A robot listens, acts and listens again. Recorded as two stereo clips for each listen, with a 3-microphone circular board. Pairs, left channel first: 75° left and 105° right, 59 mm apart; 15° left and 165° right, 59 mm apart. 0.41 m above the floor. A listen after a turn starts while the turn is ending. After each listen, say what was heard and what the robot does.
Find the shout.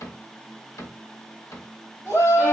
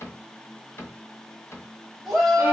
The shout: 100° left. Turn 100° left.
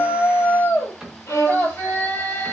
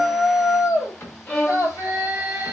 The shout is now 25° left. Turn 25° left.
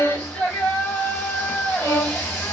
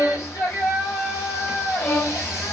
Found it: a shout, straight ahead, 2 to 4 m away.